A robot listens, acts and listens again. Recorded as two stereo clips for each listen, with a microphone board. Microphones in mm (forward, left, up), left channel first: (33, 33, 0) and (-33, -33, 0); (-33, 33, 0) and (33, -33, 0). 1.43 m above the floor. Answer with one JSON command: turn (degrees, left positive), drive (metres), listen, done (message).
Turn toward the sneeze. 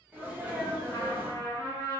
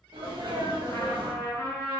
{"turn": -65}
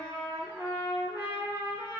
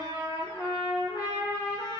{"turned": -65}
{"done": "Facing where the sneeze came from. I can't hear it now."}